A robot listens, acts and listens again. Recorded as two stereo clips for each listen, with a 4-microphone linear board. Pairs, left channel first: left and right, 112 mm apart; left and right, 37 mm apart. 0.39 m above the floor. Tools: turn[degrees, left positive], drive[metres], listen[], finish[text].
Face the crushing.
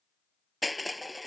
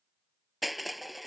Action: turn[30]
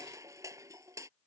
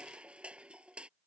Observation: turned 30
Thought: So it is at 30° right.
Action: turn[-30]
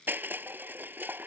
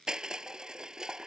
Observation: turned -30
Thought: The crushing is now 15° right.
Action: turn[-15]
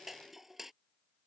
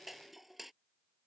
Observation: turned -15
Action: finish[Facing the crushing.]